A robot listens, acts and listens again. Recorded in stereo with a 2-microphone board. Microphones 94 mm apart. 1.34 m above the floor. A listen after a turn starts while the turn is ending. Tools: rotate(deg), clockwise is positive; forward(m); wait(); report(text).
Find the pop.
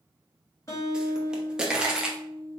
rotate(30)
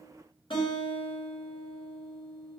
wait()
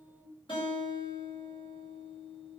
report("I heard a pop, but can't make it out now. It was about 20° left or 140° right.")